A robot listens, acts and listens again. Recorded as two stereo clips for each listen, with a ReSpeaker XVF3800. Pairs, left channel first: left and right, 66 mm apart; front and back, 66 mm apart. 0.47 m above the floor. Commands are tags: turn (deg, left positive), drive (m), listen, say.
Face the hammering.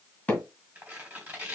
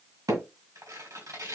<turn deg="160"/>
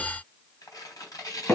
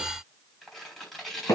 <turn deg="40"/>
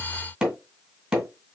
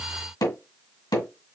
<say>Facing the hammering, 2 to 4 m away.</say>